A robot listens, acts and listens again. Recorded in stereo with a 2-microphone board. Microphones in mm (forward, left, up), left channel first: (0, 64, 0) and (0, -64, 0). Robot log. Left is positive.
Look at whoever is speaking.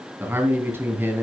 note: The man speaking: about 20° right or 160° right.
cmd yaw -20
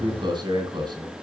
note: So it is at 140° right.
cmd yaw -140
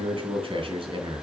note: The man speaking is now 45° right.
cmd yaw -45
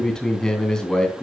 end: Found it: a man speaking, straight ahead, 2 to 4 m away.